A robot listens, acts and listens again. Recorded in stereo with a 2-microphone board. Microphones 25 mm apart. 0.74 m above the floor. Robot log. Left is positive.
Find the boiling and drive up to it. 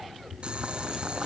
note: The boiling: about 40° right or 140° right.
cmd yaw -40
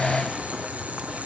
note: So it is at 100° right.
cmd yaw -100
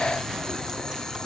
note: The boiling is now 20° left.
cmd yaw +20
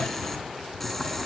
cmd fwd 1.0
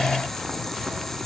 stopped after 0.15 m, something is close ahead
note: The boiling is now 10° left.
cmd yaw +10
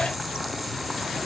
end: Something is in my way. I am facing the boiling but have not reached it.